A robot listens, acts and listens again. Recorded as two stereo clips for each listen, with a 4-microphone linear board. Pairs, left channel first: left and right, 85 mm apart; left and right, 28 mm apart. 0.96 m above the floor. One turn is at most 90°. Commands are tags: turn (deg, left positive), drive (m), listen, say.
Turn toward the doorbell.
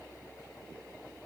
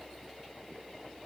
<listen/>
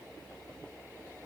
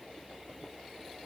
<listen/>
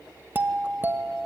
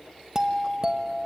<turn deg="-25"/>
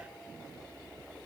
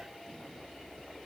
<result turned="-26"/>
<listen/>
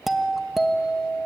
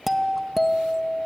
<say>Found it: a doorbell, straight ahead.</say>